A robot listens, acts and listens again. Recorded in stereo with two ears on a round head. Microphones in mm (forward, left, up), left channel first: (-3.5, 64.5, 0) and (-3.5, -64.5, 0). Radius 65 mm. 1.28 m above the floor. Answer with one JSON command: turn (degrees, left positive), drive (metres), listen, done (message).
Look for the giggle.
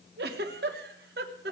{"turn": -90}
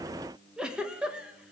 {"done": "Facing the giggle, 1 to 2 m away."}